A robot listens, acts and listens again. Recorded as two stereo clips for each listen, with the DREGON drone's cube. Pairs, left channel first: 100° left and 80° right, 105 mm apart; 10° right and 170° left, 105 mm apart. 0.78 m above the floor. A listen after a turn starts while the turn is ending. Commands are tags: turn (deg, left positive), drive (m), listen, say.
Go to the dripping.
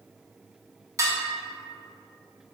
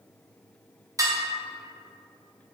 <listen/>
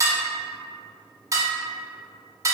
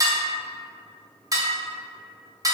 <listen/>
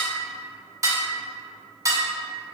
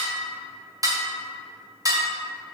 <say>I can't make out dripping, only dishes clattering.</say>